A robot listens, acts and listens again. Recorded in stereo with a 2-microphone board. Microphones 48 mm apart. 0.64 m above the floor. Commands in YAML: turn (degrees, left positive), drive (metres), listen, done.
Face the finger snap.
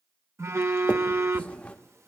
turn: 25
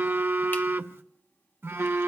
listen: true
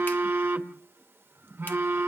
listen: true
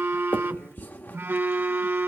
turn: 125
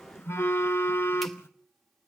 listen: true
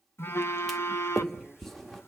done: "Facing the finger snap."